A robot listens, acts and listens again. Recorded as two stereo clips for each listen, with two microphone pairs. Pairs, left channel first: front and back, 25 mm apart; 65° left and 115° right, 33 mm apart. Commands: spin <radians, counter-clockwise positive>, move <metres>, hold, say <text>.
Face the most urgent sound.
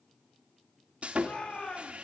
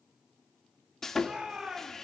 spin -0.79
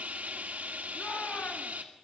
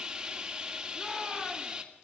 hold
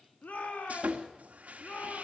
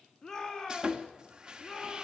spin -0.17
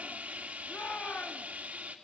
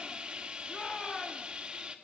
say Found it: a shout, straight ahead, over 4 m away.